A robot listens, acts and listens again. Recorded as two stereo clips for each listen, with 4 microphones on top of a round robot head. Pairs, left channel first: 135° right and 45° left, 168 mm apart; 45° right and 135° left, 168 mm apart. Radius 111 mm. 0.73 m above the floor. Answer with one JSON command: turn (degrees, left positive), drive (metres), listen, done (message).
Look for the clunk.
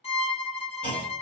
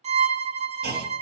{"turn": 145}
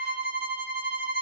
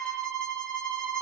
{"done": "I heard a clunk from this way, but can't make it out now."}